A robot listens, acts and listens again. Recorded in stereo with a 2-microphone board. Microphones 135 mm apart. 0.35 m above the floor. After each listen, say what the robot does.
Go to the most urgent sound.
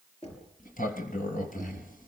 Keep listening.
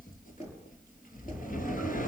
Keep listening.
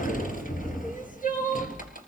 Turn 70° left.
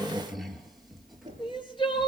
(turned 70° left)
Turn 35° left.
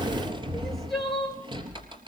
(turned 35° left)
Drive 1.0 m forward.
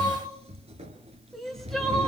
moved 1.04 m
Drive 1.0 m forward.
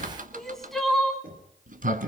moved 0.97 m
Drive 1.0 m forward.
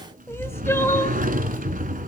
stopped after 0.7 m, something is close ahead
Turn 20° left.
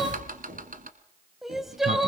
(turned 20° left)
I am next to the crying.